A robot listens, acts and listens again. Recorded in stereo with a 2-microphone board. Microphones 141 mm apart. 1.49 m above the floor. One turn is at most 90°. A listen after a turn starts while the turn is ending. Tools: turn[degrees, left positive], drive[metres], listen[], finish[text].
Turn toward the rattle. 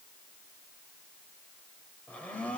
Action: listen[]
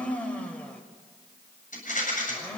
Thought: The rattle: about 70° left or 110° left.
Action: turn[70]
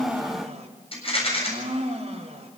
Thought: So it is at 40° left.
Action: turn[40]
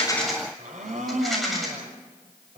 Action: finish[Found it: a rattle, straight ahead.]